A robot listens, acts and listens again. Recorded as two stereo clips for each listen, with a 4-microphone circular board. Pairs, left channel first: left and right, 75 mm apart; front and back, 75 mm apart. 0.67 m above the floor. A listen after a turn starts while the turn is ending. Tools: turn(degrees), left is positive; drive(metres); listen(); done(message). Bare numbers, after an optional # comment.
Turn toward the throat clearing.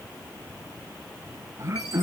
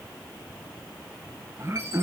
# The throat clearing: 130° right.
turn(-130)
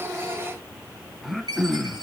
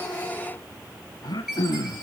done("Facing the throat clearing.")